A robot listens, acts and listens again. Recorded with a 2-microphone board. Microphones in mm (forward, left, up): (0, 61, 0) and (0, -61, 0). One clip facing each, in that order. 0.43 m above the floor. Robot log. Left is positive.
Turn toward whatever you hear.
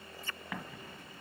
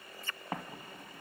note: The explosion: about 40° right or 140° right.
cmd yaw -40
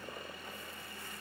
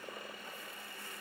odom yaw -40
cmd idle
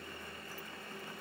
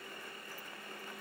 end: I heard an explosion, but can't make it out now. It was about straight ahead or 100° right.